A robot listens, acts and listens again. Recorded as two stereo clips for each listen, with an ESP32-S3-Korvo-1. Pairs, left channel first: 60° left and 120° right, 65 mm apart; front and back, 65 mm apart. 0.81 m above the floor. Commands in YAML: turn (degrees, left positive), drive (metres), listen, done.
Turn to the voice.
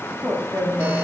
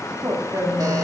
turn: 135
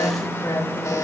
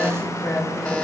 listen: true
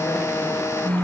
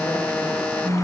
listen: true
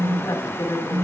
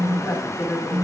turn: 40
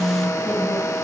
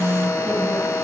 listen: true
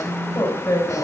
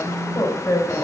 turn: 15
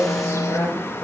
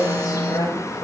done: "Facing the woman speaking."